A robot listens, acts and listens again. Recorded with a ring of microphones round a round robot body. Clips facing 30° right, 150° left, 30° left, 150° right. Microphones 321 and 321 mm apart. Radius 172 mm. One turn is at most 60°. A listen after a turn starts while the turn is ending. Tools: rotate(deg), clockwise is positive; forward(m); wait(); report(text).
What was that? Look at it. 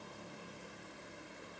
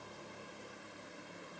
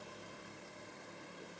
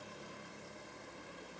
wait()
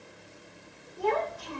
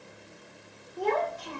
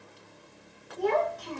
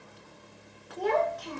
rotate(60)
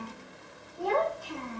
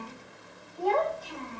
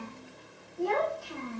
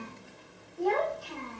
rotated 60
rotate(60)
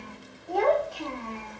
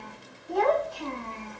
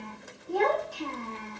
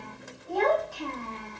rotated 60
rotate(40)
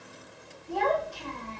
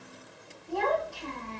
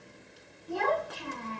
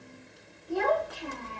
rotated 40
report("Found it: a child speaking, straight ahead.")